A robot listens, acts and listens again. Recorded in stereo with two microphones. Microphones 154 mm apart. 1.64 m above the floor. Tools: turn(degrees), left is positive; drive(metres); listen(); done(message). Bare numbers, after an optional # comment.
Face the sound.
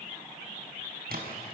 turn(-90)
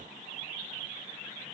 done("Facing where the splash came from. I can't hear it now.")